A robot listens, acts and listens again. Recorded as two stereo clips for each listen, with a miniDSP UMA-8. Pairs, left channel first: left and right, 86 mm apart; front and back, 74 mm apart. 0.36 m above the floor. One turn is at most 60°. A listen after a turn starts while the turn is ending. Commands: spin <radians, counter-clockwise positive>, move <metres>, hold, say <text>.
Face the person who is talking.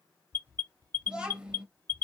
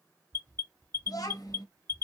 spin -0.26
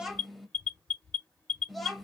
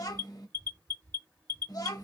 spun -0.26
say Found it: a child speaking, straight ahead, 1 to 2 m away.